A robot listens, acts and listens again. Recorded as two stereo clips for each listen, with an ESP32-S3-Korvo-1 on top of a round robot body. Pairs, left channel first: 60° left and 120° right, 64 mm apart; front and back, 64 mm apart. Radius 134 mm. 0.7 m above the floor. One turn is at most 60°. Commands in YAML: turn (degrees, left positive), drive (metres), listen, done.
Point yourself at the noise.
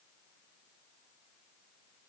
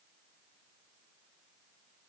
listen: true
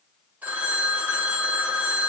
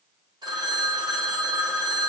turn: 60
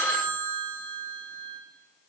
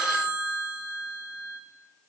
turn: 60
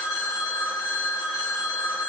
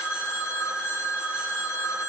turn: 35
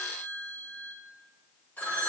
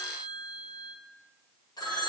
done: "Found it: a phone ringing, straight ahead."